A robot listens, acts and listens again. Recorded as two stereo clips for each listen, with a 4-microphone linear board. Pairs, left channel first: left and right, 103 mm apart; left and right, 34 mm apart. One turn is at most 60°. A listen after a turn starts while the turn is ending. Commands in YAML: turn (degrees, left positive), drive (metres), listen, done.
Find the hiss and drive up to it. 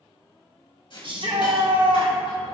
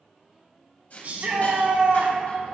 turn: 55
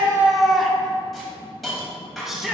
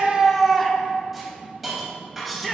drive: 1.0
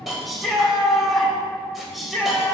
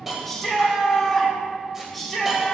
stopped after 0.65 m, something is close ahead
done: "Something is in my way. I am facing the hiss but have not reached it."